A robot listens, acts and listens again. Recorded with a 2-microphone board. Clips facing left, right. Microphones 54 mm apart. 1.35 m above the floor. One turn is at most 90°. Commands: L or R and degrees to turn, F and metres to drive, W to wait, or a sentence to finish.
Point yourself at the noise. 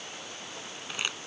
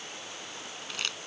L15
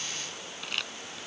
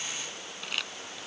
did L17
Found it: crumpling, straight ahead.